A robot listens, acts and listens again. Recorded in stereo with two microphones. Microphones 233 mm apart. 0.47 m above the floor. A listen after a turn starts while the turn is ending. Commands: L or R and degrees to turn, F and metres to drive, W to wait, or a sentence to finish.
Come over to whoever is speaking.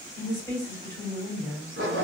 L30
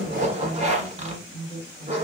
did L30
L140
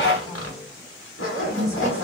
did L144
F1.0
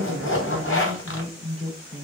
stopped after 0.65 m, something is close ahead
Arrived at the woman speaking, straight ahead.